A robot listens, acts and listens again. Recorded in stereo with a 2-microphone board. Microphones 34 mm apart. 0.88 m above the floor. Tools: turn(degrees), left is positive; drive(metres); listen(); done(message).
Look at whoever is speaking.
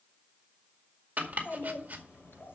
turn(degrees=90)
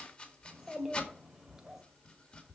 turn(degrees=-10)
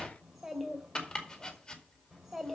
done("Found it: a child speaking, straight ahead.")